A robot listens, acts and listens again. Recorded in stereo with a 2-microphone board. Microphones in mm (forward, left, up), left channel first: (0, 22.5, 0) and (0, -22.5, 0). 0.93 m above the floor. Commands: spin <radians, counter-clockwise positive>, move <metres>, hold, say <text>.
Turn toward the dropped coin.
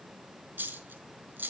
spin -0.87
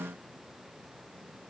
hold
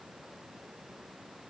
say I heard a dropped coin, but can't make it out now. It was about straight ahead or 80° right.